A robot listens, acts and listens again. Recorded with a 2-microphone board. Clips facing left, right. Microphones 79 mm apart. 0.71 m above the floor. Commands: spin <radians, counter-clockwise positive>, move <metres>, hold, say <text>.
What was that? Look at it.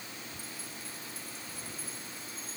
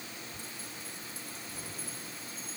spin -0.52
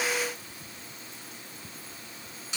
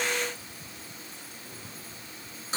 spin -2.44
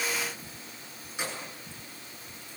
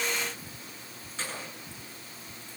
spin 0.26
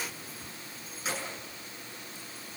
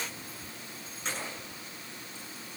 say Found it: keys jangling, straight ahead, over 4 m away.